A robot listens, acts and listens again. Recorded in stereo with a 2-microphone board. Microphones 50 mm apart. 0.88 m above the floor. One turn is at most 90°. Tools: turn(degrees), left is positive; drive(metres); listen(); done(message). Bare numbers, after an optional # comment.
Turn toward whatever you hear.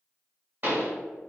# The pop: about 45° right or 135° right.
turn(-45)
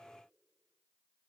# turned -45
listen()
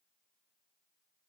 done("I heard a pop, but can't make it out now. It was about straight ahead or 90° right.")